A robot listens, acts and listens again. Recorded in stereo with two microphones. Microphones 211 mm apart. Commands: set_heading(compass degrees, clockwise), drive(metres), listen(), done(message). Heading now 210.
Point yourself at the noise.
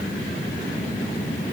listen()
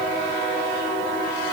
listen()
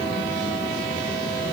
done("I can't make out anything.")